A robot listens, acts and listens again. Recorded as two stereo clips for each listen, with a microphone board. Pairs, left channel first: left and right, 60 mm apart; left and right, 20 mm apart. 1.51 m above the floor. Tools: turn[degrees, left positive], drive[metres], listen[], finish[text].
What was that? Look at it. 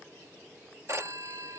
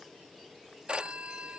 Thought: The phone ringing: about 50° right or 130° right.
Action: turn[-50]
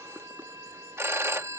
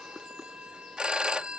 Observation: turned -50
Thought: So it is at 65° right.
Action: turn[-65]
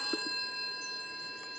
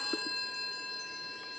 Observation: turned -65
Action: finish[Found it: a phone ringing, straight ahead.]